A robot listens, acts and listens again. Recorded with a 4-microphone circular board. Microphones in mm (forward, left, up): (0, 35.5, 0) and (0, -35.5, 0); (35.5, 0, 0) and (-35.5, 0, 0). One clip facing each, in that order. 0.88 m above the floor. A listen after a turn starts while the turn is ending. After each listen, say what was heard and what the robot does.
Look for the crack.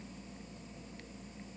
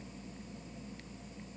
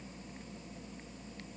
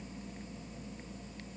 Keep listening.
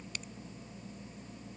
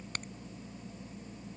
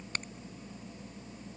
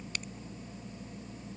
The crack: 50° right. Turn 50° right.
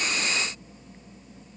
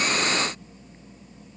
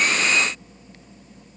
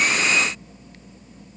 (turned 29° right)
Nothing new. It was at 20° right. Turn 20° right.
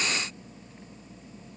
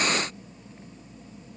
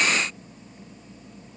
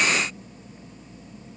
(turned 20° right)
I heard a crack from this way, but can't make it out now.